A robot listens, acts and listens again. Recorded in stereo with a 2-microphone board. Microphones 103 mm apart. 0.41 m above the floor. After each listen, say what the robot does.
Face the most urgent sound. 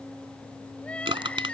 Turn 30° left.
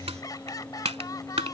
Turn 135° left.
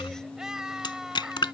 Found it: crying, straight ahead.